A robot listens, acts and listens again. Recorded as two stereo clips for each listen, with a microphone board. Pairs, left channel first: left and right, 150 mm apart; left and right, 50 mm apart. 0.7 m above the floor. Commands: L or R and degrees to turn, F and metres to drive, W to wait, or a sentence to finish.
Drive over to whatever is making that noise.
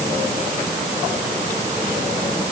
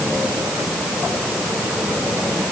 W
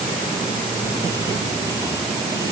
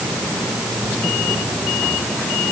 W
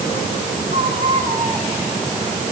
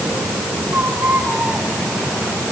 R45
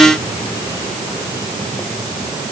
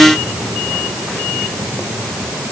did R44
W
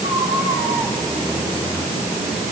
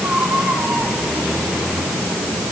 F1.0
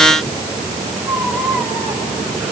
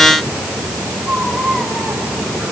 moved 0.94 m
R10
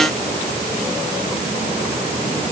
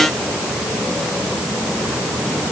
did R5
W
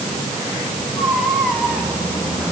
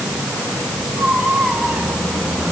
F1.0
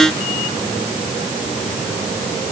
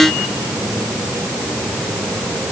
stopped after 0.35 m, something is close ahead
W
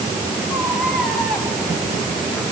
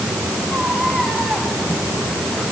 I am next to the baby crying.